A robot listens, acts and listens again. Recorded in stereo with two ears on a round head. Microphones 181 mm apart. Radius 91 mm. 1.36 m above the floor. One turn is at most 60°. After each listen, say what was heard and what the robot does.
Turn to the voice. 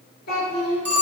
The child speaking: about 50° left or 130° left. Turn 50° left.
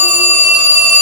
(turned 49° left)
Keep listening.
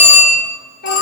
So it is at 70° left. Turn 60° left.
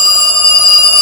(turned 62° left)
Keep listening.
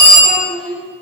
Found it: a child speaking, straight ahead, 1 to 2 m away.